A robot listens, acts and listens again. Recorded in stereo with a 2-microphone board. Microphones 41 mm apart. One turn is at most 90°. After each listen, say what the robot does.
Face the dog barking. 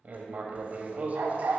Turn 75° right.
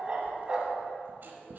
Turn 20° right.
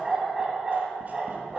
Turn 10° right.
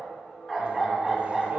Found it: a dog barking, straight ahead.